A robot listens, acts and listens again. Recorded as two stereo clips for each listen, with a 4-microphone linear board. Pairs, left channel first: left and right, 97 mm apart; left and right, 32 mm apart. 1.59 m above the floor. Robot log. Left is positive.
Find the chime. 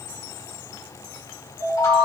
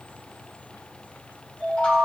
note: The chime: about 40° left or 140° left.
cmd yaw +40
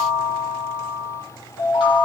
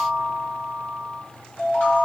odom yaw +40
note: So it is at 95° left.
cmd yaw +95
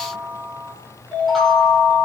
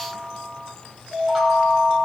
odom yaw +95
end: Found it: a chime, straight ahead.